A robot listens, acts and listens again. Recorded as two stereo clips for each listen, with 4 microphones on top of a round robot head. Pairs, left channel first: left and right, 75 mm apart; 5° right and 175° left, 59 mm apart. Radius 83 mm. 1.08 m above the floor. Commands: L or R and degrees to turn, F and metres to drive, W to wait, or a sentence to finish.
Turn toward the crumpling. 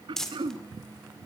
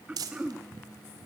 L175
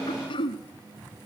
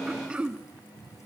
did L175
W
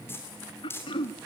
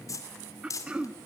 L25
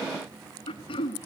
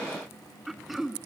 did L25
W
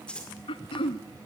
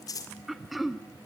L10
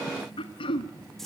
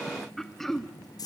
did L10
Found it: crumpling, straight ahead.